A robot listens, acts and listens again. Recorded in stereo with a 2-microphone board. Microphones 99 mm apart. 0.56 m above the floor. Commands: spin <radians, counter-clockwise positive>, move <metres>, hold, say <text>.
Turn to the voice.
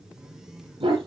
hold
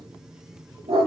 hold
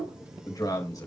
spin 0.70
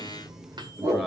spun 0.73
say Found it: a man speaking, straight ahead, 2 to 4 m away.